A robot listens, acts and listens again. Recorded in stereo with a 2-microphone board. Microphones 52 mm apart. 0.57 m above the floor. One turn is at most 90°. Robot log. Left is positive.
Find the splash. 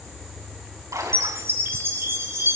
cmd yaw -90
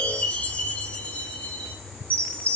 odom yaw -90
end: Facing where the splash came from. I can't hear it now.